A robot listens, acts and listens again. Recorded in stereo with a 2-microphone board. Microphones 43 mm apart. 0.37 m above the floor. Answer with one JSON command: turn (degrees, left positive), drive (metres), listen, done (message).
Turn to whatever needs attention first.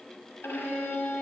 {"listen": true}
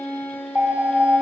{"turn": -45}
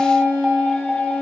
{"turn": -10}
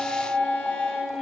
{"done": "Found it: an alarm, straight ahead, 1 to 2 m away."}